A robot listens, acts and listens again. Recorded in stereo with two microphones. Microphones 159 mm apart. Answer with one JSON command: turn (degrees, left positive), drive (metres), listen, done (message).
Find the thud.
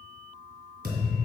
{"turn": -70}
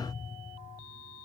{"listen": true}
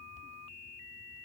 {"done": "I heard a thud, but can't make it out now. It was about straight ahead or 40° right."}